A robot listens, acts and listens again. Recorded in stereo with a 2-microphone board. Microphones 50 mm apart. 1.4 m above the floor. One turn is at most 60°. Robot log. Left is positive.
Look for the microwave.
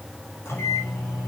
note: The microwave: about 60° left or 120° left.
cmd yaw +60
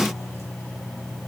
note: So it is at 60° left.
cmd yaw +60
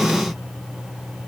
end: Facing the microwave, over 4 m away.